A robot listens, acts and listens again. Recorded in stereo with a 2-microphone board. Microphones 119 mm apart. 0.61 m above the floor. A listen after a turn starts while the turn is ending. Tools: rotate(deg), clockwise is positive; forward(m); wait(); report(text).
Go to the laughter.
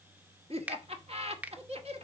rotate(55)
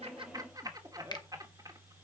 rotate(40)
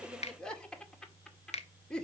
rotate(-10)
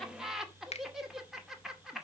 forward(1.0)
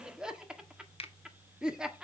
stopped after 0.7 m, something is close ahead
rotate(10)
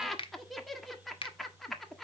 report("Arrived at the laughter, straight ahead.")